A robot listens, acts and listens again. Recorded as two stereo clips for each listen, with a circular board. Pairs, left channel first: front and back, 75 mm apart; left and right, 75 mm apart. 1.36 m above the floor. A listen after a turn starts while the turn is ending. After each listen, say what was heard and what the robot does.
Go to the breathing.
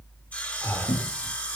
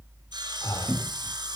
The breathing: 60° left. Turn 60° left.
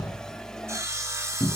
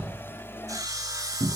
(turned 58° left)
Keep listening.
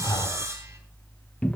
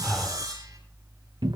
Drive 1.0 m forward.
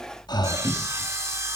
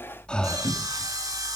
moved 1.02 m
The breathing is now 10° left. Turn 10° left.
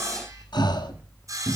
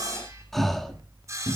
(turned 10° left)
Drive 1.0 m forward.
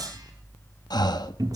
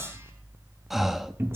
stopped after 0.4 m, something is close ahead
Arrived at the breathing, straight ahead.